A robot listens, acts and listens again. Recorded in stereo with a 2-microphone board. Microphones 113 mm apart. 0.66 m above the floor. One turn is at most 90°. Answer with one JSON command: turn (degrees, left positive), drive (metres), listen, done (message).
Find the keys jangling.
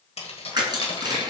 {"turn": 55}
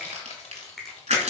{"turn": 75}
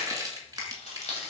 {"turn": 80}
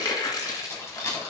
{"turn": 25}
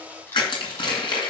{"listen": true}
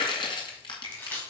{"turn": 15}
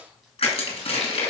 {"listen": true}
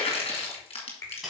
{"done": "Found it: keys jangling, straight ahead, 2 to 4 m away."}